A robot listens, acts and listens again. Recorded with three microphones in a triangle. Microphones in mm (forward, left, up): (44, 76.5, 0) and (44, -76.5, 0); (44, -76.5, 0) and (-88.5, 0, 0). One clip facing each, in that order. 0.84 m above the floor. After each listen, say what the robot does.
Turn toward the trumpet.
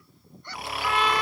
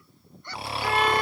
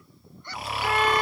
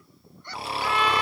Turn 60° right.
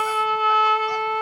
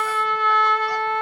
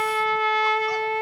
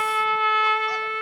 Turn 10° left.
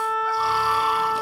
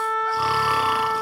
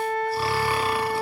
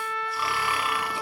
Facing the trumpet, under 1 m away.